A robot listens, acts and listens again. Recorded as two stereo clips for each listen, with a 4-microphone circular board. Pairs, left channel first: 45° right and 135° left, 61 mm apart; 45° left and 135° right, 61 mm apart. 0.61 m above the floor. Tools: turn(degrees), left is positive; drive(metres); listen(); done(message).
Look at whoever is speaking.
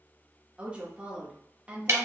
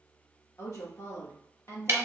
turn(degrees=70)
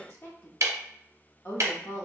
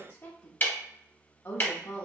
done("Facing the woman speaking, 1 to 2 m away.")